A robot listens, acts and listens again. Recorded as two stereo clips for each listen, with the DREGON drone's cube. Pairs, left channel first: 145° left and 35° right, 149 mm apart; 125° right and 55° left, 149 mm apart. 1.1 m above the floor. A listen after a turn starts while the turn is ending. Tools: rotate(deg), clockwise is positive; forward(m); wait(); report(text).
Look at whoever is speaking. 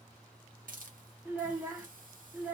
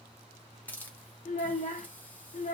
rotate(110)
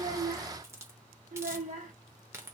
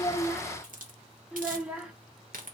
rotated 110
rotate(30)
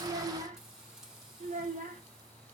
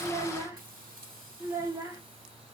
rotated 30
rotate(15)
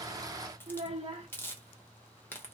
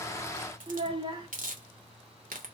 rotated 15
report("Found it: a child speaking, straight ahead.")